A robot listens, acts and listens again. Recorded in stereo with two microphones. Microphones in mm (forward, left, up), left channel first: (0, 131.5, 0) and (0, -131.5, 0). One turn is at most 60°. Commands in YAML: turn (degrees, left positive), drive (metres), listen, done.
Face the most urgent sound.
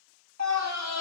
turn: -60
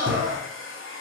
turn: -45
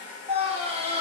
turn: -20
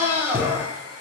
turn: -10
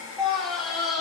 done: "Found it: a scream, straight ahead."